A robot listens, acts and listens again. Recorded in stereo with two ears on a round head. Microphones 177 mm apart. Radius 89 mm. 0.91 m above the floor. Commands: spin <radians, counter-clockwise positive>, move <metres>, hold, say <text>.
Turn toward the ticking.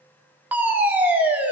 hold
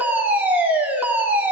hold
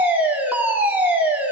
say I can't make out ticking to turn to.